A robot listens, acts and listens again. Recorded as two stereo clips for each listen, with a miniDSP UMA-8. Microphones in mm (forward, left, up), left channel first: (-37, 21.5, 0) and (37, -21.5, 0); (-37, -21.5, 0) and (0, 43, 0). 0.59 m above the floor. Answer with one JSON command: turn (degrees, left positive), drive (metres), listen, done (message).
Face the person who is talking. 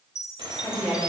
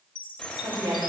{"turn": 65}
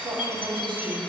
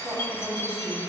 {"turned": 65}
{"turn": -10}
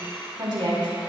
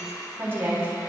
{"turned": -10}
{"done": "Facing the woman speaking, over 4 m away."}